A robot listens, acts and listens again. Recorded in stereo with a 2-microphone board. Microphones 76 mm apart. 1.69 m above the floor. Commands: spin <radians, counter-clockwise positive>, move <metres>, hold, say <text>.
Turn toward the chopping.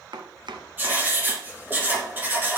spin -1.57
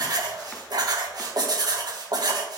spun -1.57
hold
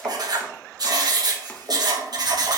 hold
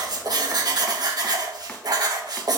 say I heard chopping from this way, but can't make it out now.